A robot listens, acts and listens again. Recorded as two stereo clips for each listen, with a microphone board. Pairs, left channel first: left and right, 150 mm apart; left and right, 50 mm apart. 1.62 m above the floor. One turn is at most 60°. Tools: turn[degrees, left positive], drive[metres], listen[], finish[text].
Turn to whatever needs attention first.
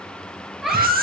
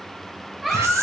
Action: turn[30]
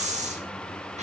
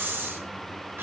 Action: listen[]
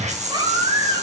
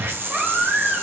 Thought: So it is at 30° right.
Action: turn[-30]
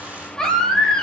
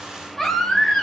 Action: finish[Found it: a baby crying, straight ahead, over 4 m away.]